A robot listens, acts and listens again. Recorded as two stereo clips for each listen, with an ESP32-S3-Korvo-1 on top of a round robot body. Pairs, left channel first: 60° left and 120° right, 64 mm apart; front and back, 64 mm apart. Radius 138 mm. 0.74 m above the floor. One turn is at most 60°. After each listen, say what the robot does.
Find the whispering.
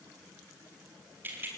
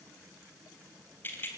Keep listening.
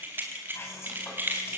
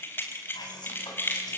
Facing the whispering.